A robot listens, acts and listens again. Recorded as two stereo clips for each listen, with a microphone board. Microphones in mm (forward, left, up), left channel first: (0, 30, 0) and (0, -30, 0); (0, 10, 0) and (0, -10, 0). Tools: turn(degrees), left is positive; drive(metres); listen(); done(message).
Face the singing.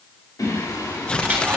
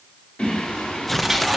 turn(degrees=75)
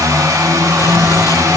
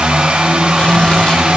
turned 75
listen()
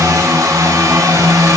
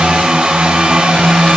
turn(degrees=15)
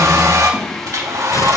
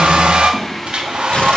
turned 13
turn(degrees=10)
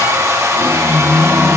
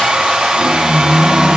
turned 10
done("Found it: singing, straight ahead.")